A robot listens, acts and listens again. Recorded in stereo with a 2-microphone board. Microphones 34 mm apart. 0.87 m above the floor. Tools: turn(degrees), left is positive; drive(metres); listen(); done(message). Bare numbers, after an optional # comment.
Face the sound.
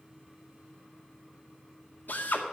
# The drill: about 65° left or 115° left.
turn(65)
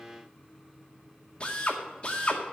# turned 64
# So it is at 35° left.
turn(35)
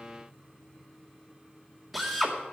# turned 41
done("Found it: a drill, straight ahead.")